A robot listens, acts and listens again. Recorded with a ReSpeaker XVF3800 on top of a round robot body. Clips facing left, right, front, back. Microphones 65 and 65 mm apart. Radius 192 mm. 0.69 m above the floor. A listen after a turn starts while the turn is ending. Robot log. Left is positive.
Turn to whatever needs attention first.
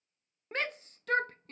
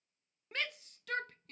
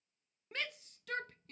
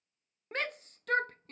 note: The shout: 140° left.
cmd yaw +140
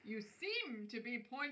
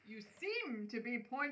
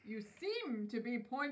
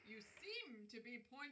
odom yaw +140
note: The shout is now 20° right.
cmd yaw -20
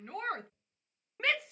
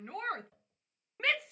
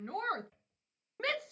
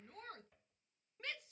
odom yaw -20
end: Found it: a shout, straight ahead.